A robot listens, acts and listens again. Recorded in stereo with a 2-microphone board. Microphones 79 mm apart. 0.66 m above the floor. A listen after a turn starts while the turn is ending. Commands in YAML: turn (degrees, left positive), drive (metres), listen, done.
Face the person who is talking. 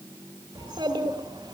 turn: -90
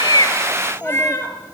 turn: -25
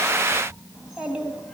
turn: -15
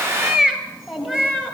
done: "Facing the child speaking."